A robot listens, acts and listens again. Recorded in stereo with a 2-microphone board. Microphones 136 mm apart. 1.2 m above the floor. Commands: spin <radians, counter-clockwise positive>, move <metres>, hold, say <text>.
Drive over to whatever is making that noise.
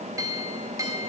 spin -0.44
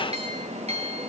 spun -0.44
spin -2.27
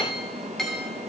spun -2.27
move 1.0
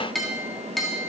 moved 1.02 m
move 1.0
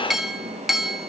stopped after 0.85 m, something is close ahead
say Arrived at the clink, straight ahead.